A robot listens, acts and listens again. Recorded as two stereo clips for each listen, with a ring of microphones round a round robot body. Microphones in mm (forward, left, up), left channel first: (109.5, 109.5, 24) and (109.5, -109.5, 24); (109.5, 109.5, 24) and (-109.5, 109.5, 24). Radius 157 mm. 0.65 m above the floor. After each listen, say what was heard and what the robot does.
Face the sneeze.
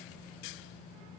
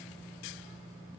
Keep listening.
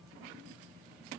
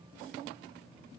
Keep listening.
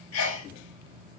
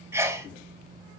The sneeze: 100° left. Turn 100° left.
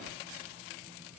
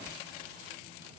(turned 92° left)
Nothing new. It was at 10° left. Turn 10° left.
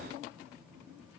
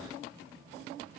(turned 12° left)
Facing where the sneeze came from. I can't hear it now.